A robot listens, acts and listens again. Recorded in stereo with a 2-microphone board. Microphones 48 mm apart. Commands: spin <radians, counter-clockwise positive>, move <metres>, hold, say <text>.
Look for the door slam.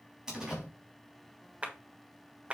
spin -0.52
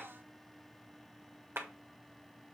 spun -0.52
hold
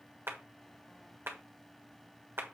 say I heard a door slam, but can't make it out now. It was about 20° left or 140° right.